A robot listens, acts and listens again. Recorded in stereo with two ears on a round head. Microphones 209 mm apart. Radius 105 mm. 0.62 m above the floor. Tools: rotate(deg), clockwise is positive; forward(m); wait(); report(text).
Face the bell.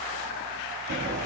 wait()
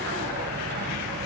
wait()
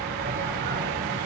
report("I can't make out a bell, only a sliding door.")